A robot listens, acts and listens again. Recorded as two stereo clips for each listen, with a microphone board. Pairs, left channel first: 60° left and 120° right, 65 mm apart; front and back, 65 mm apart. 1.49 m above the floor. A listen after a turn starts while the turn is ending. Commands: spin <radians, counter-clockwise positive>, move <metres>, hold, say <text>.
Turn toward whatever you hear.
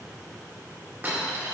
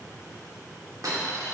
spin 3.14
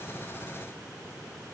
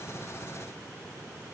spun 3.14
say I heard a dropped coin from this way, but can't make it out now.